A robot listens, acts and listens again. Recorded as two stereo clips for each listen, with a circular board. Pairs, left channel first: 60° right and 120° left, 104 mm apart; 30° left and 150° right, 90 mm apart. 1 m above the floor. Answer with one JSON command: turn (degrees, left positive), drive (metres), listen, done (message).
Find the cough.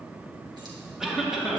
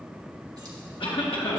{"turn": 35}
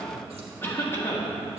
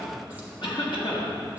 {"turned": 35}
{"done": "Found it: a cough, straight ahead."}